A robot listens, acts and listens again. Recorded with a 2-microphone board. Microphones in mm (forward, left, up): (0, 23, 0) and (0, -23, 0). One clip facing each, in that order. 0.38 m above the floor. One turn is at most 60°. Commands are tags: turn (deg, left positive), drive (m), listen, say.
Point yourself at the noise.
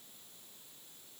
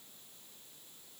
<listen/>
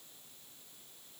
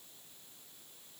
<listen/>
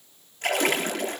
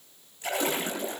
<turn deg="60"/>
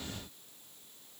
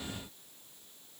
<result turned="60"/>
<turn deg="30"/>
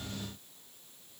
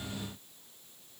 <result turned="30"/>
<say>Facing where the splash came from. I can't hear it now.</say>